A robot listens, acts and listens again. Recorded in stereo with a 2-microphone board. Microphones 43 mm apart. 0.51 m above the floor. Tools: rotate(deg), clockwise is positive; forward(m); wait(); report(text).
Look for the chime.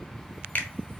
wait()
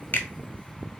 wait()
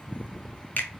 report("I can't make out a chime to turn to.")